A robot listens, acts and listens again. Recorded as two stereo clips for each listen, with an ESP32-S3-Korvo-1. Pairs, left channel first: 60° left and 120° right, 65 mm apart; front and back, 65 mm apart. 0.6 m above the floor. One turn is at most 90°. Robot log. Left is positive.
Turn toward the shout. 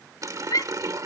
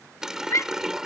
note: The shout: 40° left.
cmd yaw +40
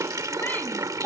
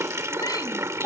end: Found it: a shout, straight ahead.